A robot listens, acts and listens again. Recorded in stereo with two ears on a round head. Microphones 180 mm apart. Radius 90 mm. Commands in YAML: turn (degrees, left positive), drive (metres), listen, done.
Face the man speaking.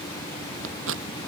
listen: true
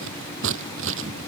listen: true
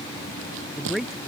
turn: 30
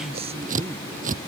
turn: -30
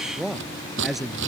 done: "Facing the man speaking."